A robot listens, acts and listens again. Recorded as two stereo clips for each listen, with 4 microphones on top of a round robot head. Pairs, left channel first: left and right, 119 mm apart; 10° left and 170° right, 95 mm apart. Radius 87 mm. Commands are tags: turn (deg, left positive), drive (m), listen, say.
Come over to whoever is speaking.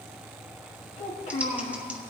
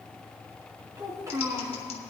<turn deg="135"/>
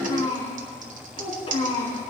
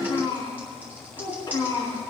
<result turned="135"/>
<turn deg="55"/>
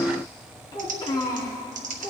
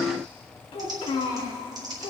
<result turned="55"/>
<turn deg="35"/>
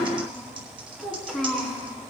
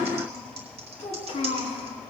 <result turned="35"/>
<drive m="1.0"/>
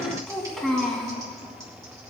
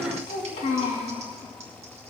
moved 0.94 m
<drive m="1.0"/>
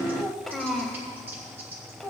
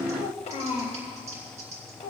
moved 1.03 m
<drive m="1.0"/>
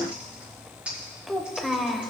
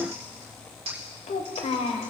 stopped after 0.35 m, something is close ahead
<say>Arrived at the child speaking, straight ahead.</say>